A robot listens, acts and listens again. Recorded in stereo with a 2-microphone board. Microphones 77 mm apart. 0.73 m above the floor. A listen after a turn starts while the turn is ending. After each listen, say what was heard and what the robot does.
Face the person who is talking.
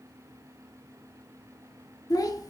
The child speaking: about 55° left or 125° left. Turn 55° left.
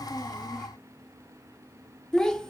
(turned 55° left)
So it is at 10° left. Turn 10° left.
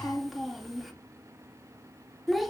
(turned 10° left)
Facing the child speaking.